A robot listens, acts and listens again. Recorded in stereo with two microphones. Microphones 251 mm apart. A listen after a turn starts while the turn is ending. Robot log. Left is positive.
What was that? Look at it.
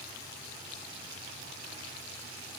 cmd idle
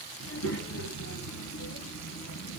cmd yaw +90
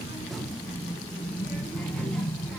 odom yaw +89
end: Found it: a child speaking, straight ahead.